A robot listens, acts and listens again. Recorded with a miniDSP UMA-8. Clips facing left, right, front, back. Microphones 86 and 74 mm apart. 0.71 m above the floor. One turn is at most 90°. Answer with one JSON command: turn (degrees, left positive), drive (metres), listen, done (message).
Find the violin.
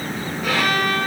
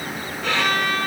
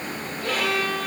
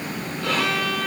{"turn": 90}
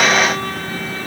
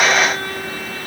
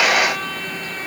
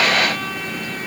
{"turn": 85}
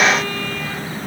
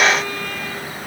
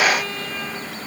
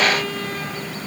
{"listen": true}
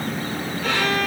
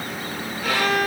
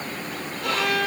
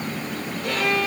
{"done": "Found it: a violin, straight ahead, over 4 m away."}